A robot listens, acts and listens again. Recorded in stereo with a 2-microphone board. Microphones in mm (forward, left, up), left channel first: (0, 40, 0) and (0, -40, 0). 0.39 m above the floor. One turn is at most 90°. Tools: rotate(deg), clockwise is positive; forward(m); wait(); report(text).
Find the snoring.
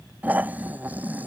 rotate(20)
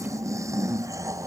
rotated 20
rotate(90)
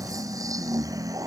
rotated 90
rotate(45)
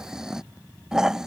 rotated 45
rotate(10)
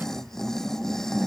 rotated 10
report("Found it: snoring, straight ahead.")